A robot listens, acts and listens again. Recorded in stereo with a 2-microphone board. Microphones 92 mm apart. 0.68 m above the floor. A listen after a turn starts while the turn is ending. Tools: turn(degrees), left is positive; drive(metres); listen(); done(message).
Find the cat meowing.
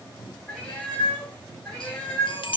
turn(degrees=30)
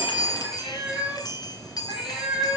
turn(degrees=-10)
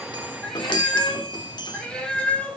turn(degrees=10)
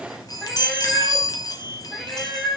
done("Found it: a cat meowing, straight ahead.")